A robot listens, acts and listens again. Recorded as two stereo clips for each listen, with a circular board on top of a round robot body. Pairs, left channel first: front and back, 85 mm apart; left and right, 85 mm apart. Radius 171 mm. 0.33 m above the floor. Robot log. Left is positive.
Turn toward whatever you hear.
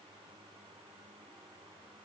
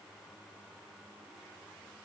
cmd idle
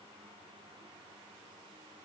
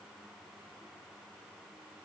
cmd idle
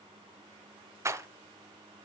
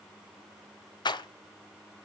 note: The rattle: 125° left.
cmd yaw +125
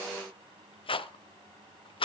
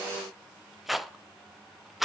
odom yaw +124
end: Facing the rattle.